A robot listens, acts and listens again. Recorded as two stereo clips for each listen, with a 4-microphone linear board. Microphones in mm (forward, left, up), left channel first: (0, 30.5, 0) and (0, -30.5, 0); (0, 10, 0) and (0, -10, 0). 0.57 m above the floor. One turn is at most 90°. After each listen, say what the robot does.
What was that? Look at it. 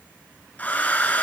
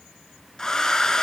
Turn 25° left.
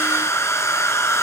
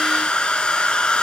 Turn 90° left.
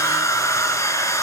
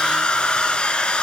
Turn 65° left.
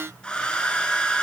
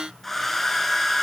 Turn 15° left.
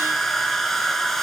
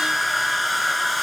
Found it: a hair dryer, straight ahead, 1 to 2 m away.